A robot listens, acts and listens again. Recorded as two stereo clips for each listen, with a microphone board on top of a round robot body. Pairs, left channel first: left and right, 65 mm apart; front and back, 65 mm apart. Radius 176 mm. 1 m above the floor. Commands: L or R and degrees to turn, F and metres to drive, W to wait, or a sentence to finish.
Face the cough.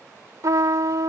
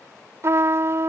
W
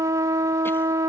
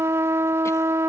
W
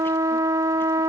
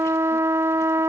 I can't make out a cough to turn to.